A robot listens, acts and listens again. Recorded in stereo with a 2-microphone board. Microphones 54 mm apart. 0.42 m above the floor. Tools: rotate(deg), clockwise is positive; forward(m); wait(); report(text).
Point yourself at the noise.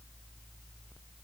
wait()
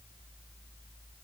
wait()
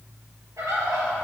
rotate(90)
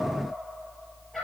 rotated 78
report("Found it: a bird, straight ahead.")